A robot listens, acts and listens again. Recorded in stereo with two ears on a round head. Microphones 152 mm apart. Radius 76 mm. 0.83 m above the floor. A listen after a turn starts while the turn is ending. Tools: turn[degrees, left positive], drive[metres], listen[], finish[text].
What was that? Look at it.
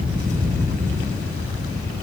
Action: listen[]
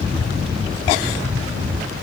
Action: listen[]
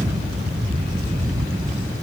Action: finish[I can't make out anything to turn to.]